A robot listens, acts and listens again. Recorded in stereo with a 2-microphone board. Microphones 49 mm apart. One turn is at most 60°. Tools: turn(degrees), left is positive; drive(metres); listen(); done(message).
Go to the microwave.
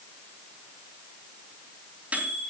turn(degrees=-30)
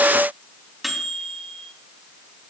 drive(metres=1.0)
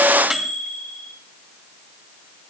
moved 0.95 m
turn(degrees=-10)
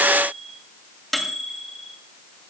drive(metres=1.0)
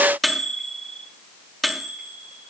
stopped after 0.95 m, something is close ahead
done("Arrived at the microwave, straight ahead.")